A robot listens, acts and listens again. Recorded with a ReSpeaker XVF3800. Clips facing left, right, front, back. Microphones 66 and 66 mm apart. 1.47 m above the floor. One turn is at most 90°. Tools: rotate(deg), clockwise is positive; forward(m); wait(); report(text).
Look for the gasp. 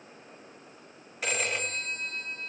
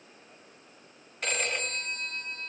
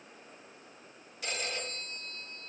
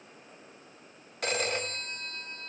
wait()
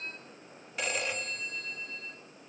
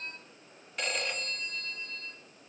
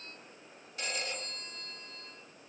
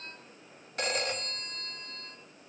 wait()
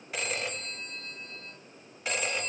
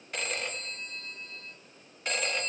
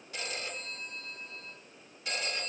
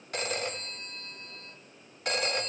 report("I can't make out a gasp, only a phone ringing.")